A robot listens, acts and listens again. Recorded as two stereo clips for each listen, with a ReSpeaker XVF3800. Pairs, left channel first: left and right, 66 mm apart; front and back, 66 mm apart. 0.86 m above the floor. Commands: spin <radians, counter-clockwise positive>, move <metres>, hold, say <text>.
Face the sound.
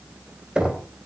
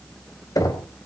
spin -0.26
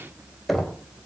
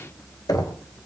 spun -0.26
say Facing the knocking.